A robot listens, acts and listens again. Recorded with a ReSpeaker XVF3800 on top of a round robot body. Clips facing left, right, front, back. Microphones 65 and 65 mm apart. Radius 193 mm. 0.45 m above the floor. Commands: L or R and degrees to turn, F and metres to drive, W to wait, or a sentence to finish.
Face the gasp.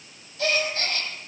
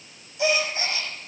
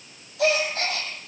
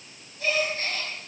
R15
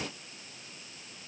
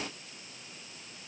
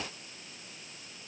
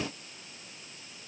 I heard a gasp from this way, but can't make it out now.